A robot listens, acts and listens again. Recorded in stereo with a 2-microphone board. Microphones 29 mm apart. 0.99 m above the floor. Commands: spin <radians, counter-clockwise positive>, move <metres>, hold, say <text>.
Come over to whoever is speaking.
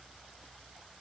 hold
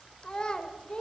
spin 0.52
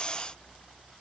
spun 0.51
hold
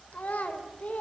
spin 2.09
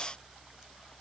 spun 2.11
hold
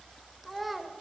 move 1.0
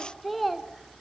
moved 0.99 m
move 1.0
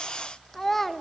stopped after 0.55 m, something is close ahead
spin 0.17
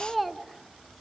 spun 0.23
say I am next to the child speaking.